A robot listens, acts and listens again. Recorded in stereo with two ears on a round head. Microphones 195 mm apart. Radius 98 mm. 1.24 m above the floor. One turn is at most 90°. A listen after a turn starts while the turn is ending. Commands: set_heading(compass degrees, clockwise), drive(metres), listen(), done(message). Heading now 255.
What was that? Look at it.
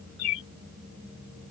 set_heading(185)
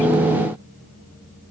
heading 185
listen()
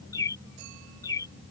set_heading(170)
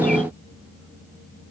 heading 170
listen()
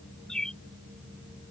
done("Found it: a bird, straight ahead.")